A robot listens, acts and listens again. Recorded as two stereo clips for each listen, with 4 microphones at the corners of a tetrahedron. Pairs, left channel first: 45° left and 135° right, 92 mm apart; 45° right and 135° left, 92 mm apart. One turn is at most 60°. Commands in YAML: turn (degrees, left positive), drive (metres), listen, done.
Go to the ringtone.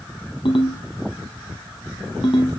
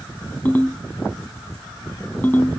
turn: 25
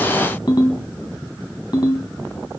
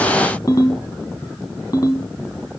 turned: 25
drive: 1.0
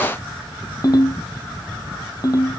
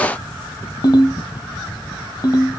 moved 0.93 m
drive: 1.0
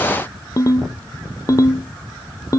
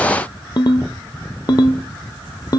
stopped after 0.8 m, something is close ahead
done: "Arrived at the ringtone, straight ahead."